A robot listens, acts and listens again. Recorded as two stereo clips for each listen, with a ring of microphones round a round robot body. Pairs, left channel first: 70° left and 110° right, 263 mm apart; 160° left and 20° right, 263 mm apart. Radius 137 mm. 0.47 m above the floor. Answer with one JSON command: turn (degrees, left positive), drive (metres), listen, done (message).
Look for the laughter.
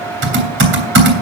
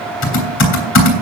{"listen": true}
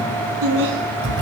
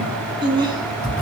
{"turn": -100}
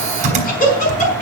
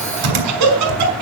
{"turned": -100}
{"done": "Found it: laughter, straight ahead, over 4 m away."}